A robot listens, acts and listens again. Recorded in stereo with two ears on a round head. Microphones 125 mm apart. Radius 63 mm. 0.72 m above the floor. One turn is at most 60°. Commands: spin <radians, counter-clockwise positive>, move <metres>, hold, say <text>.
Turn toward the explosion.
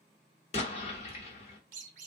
spin 0.79
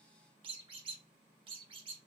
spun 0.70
hold
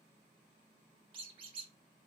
say I heard an explosion, but can't make it out now. It was about 5° left or 95° left.